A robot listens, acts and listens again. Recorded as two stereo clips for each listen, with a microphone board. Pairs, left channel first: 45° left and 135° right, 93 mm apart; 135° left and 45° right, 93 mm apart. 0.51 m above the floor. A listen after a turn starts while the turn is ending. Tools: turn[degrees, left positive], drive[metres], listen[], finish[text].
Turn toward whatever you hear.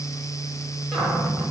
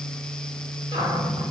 Thought: The cupboard door: 40° right.
Action: turn[-40]
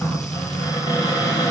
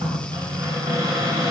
Action: finish[Found it: a cupboard door, straight ahead, 2 to 4 m away.]